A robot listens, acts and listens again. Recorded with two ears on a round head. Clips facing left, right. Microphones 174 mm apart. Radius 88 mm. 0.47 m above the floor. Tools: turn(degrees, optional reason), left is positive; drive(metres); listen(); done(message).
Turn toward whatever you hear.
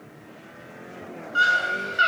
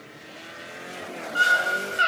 turn(degrees=20, reason="The scream: about 20° left or 160° left.")
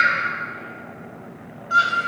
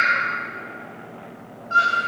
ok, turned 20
turn(degrees=135, reason="So it is at 135° left.")
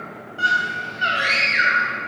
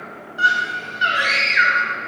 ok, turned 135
turn(degrees=-20, reason="The scream is now 20° right.")
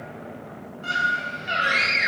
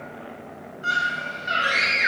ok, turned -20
done("Found it: a scream, straight ahead.")